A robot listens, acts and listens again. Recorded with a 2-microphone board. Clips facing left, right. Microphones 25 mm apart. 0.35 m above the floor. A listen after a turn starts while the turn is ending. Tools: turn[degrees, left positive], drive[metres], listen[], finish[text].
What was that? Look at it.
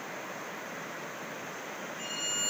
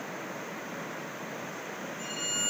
Thought: The violin: about 35° left or 145° left.
Action: turn[35]
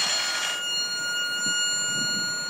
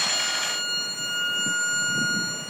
Thought: So it is at 110° left.
Action: turn[110]
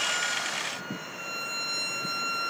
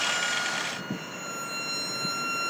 Thought: The violin is now 10° left.
Action: turn[10]
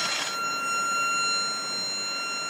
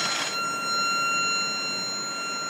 Action: finish[Facing the violin.]